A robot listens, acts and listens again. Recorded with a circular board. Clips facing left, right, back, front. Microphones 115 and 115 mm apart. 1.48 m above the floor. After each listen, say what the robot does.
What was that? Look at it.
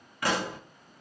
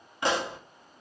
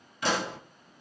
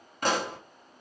Turn 25° right.
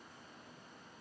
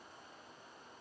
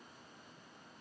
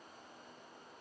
Facing where the pop came from. I can't hear it now.